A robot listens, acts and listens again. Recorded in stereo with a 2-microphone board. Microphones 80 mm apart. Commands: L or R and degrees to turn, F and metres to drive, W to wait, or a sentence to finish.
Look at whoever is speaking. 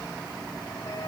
W
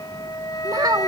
R50
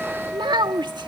R70
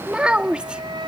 R10
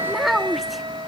Facing the child speaking.